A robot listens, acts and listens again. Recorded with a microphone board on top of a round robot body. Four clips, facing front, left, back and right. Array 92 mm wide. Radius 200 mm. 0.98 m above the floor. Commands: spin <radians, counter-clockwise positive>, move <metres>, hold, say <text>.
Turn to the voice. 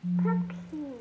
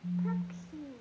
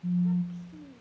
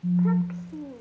spin -0.61
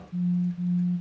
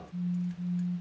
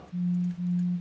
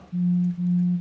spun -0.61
hold
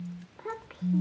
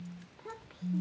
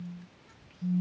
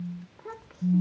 spin -0.35
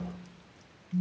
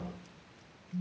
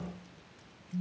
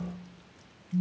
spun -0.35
hold
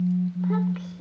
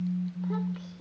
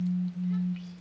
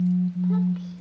say Found it: a child speaking, straight ahead.